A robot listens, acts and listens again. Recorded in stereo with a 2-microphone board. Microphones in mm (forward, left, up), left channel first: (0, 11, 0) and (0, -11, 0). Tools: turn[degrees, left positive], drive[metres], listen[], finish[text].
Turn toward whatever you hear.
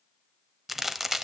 Action: turn[-30]
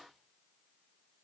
Action: listen[]
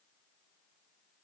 Action: finish[I heard a crack, but can't make it out now. It was about 20° left or 140° right.]